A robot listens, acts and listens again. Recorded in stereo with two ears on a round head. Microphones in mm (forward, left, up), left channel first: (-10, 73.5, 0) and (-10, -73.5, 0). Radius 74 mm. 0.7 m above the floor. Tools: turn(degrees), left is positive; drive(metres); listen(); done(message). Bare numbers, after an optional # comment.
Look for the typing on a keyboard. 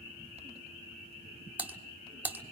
turn(-30)
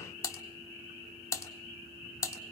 # So it is at 20° left.
turn(20)
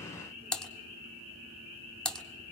done("Found it: typing on a keyboard, straight ahead.")